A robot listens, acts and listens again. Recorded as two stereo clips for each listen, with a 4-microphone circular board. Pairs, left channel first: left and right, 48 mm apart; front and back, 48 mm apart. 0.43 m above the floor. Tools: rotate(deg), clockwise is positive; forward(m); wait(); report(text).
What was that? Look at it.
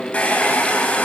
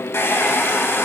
rotate(-30)
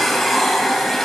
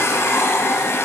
report("Facing the hair dryer.")